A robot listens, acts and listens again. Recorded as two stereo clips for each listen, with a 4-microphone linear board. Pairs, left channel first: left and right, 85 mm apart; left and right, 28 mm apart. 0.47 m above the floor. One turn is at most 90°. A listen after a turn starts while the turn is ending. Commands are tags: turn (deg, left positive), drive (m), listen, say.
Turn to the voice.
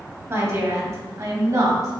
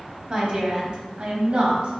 <turn deg="-40"/>
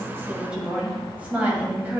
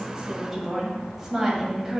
<turn deg="-25"/>
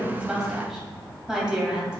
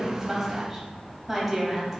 <turn deg="-10"/>
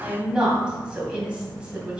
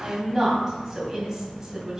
<turn deg="-15"/>
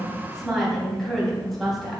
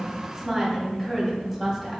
<say>Facing the woman speaking, 2 to 4 m away.</say>